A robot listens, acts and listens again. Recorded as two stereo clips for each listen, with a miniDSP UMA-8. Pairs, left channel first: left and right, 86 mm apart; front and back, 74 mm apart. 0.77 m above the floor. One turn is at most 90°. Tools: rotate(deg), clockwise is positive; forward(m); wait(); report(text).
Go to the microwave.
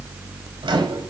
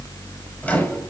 rotate(65)
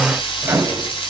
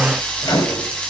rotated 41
rotate(25)
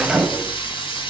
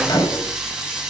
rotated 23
forward(1.0)
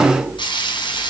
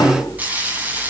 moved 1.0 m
wait()
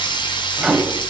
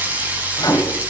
forward(1.0)
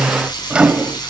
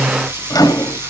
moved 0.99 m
rotate(10)
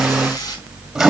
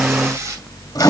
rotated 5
forward(1.0)
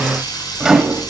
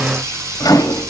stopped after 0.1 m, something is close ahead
report("I am next to the microwave.")